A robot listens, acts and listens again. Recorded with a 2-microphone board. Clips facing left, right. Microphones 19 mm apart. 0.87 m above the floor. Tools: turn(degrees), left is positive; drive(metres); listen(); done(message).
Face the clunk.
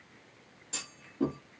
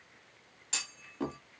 turn(degrees=-50)
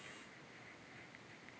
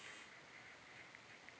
listen()
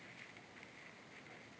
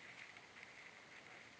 done("I heard a clunk, but can't make it out now. It was about straight ahead or 80° right.")